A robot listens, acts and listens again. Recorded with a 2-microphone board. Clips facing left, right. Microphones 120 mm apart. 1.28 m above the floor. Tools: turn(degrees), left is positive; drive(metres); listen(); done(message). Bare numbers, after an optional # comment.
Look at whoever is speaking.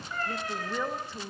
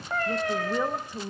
turn(-30)
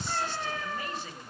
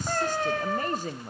# So it is at 135° right.
turn(-135)
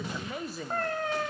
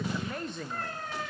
done("Found it: a woman speaking, straight ahead.")